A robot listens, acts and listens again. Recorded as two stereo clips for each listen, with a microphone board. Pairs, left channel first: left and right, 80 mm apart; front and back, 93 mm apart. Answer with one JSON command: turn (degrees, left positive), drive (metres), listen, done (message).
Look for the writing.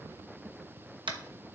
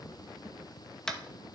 {"listen": true}
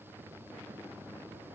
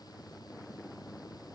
{"listen": true}
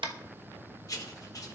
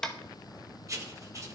{"turn": 130}
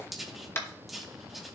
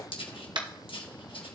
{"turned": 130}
{"done": "Found it: writing, straight ahead."}